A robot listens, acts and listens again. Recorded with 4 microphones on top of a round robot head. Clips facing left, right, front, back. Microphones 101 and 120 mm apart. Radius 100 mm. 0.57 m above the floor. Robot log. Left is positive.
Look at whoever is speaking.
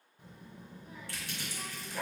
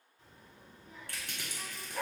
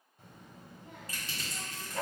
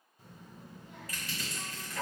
note: The child speaking: 15° left.
cmd yaw +15
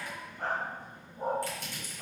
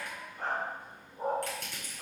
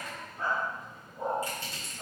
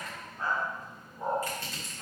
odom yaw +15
end: Found it: a child speaking, straight ahead, 1 to 2 m away.